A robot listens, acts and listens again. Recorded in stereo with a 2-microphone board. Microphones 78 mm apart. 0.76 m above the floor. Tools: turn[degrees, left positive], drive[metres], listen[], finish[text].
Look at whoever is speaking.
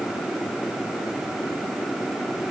Action: listen[]
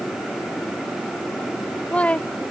Thought: The woman speaking: about 15° left or 165° left.
Action: turn[15]
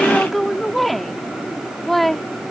Action: finish[Facing the woman speaking.]